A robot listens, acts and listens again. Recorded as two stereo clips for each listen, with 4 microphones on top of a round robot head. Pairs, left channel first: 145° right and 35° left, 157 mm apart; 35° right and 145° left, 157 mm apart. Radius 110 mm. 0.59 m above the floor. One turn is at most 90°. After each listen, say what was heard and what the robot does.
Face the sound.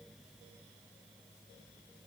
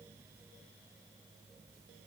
Keep listening.
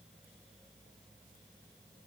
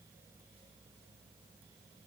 Keep listening.
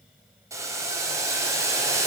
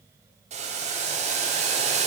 The boiling: 105° left. Turn 90° left.
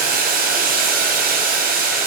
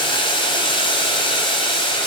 The boiling is now 20° left. Turn 20° left.
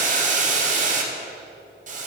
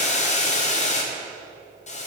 Facing the boiling, 1 to 2 m away.